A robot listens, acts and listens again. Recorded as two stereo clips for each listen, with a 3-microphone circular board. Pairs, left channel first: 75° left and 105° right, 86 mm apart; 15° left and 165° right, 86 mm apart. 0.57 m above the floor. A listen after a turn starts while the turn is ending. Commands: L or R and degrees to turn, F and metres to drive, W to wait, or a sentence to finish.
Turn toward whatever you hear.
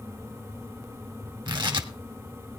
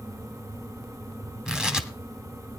R85
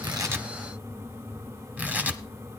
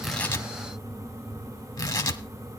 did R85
R35
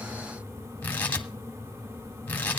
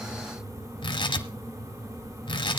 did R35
Facing the tearing paper.